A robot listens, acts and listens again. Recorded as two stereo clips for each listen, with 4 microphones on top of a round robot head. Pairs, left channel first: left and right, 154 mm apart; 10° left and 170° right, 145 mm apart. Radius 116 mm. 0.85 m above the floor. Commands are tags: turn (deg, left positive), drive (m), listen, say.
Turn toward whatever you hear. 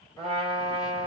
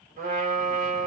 <turn deg="165"/>
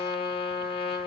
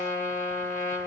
<turn deg="35"/>
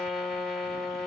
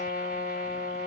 <say>Found it: a trumpet, straight ahead.</say>